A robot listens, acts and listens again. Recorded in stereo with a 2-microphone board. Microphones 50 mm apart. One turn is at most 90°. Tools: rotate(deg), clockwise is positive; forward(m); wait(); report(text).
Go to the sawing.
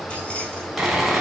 rotate(30)
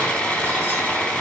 rotate(-20)
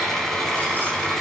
forward(1.0)
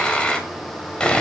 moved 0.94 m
rotate(-20)
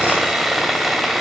forward(1.0)
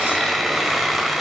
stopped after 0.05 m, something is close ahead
report("Arrived at the sawing, straight ahead.")